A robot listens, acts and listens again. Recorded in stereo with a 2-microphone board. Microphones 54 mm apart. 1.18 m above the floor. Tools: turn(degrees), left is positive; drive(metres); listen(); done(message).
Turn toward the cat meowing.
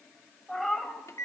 turn(degrees=30)
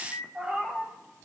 turn(degrees=-20)
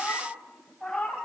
done("Facing the cat meowing, 2 to 4 m away.")